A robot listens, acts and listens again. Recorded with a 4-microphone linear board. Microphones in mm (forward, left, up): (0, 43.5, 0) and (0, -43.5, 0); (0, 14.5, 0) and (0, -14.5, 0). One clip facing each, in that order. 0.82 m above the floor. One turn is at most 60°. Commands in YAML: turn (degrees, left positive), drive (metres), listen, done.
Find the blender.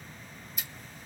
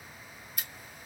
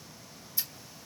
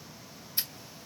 listen: true
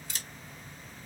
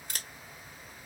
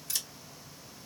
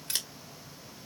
listen: true
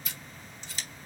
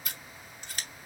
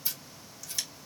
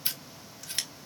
done: "I can't make out a blender to turn to."